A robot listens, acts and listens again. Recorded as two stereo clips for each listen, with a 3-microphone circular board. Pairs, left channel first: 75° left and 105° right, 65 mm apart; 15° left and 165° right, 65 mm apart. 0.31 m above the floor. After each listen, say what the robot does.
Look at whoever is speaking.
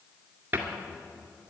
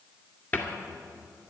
Keep listening.
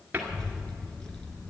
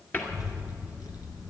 Facing the child speaking.